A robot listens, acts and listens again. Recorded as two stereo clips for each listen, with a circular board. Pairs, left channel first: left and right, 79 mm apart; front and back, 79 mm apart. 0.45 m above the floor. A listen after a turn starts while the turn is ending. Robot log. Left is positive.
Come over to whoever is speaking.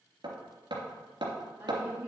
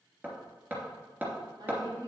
note: The woman speaking: 155° right.
cmd yaw -155
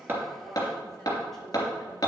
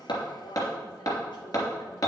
cmd fwd 1.0
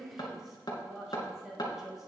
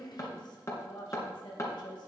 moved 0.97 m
cmd fwd 1.0
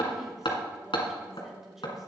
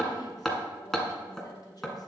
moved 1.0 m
cmd fwd 1.0
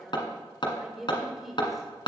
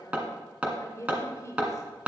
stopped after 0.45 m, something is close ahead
end: I am next to the woman speaking.